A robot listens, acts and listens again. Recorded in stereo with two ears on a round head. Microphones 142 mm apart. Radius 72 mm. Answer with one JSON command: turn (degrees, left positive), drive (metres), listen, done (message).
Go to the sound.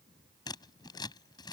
{"turn": 25}
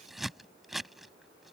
{"drive": 1.0}
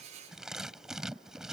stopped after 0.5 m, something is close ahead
{"done": "Blocked. The scissors is further on, straight ahead."}